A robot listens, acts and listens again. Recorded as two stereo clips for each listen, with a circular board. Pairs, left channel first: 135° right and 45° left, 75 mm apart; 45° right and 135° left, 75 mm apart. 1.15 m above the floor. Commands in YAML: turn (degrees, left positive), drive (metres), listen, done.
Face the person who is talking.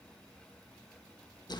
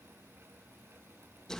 listen: true
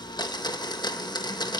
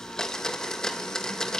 listen: true
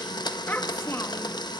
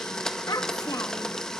turn: -80
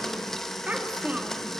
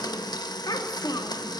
turn: -30
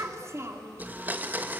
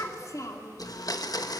done: "Found it: a child speaking, straight ahead, 2 to 4 m away."